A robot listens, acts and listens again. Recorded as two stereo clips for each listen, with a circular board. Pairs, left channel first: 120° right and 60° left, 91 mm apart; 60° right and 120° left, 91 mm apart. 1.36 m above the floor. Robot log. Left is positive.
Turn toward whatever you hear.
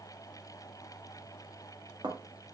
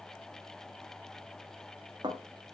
note: The dishes clattering: 90° left.
cmd yaw +90
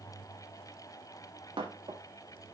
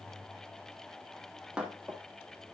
note: The dishes clattering is now 40° left.
cmd yaw +40
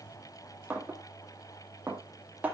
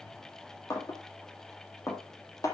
note: The dishes clattering is now 10° right.
cmd yaw -10
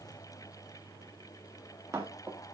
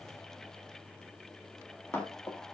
end: Facing the dishes clattering.